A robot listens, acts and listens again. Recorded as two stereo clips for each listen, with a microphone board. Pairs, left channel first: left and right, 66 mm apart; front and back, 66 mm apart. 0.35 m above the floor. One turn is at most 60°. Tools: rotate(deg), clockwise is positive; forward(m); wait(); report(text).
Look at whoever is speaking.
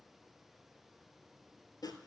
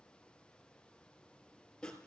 wait()
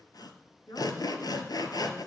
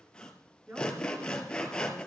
rotate(-60)
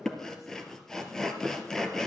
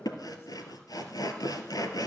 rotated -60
rotate(-60)
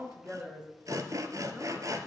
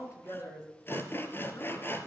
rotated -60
rotate(10)
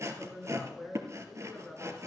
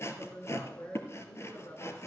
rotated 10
report("Facing the woman speaking, over 4 m away.")